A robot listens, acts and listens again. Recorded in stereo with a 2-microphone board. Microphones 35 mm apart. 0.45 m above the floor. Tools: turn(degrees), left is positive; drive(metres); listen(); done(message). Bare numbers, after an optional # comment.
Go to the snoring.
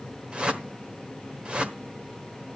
listen()
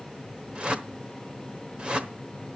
listen()
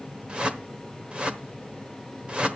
done("I can't make out snoring, only a whoosh.")